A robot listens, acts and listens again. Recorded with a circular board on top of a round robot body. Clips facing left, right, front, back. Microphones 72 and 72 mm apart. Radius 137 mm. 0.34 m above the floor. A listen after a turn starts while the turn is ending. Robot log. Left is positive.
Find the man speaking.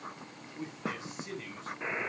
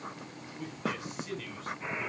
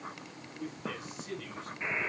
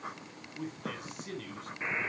note: The man speaking: 155° left.
cmd yaw +155
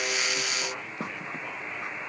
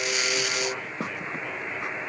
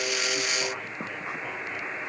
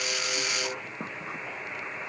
cmd idle
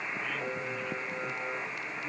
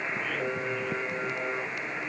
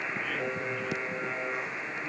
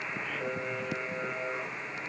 cmd idle
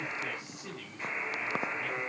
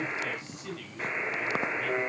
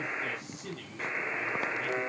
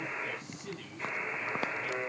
note: The man speaking is now 15° left.
cmd yaw +15
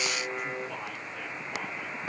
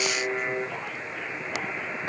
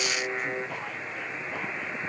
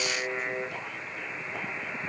cmd idle
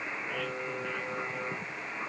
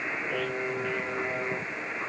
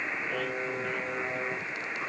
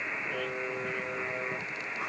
cmd idle
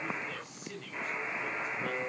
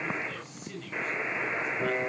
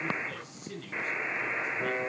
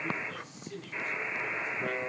end: Facing the man speaking.